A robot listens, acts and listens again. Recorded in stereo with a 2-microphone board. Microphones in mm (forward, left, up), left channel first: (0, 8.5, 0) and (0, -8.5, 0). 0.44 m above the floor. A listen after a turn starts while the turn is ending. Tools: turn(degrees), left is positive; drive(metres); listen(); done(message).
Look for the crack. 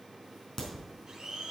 turn(degrees=20)
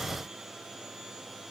listen()
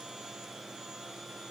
done("I heard a crack, but can't make it out now. It was about straight ahead or 140° left.")